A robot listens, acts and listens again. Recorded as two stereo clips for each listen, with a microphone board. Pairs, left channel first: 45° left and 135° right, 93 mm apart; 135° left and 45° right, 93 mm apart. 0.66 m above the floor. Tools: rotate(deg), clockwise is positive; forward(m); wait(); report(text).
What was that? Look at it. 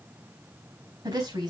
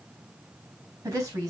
rotate(100)
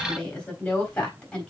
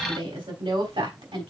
rotate(35)
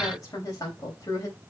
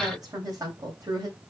report("Facing the woman speaking, 2 to 4 m away.")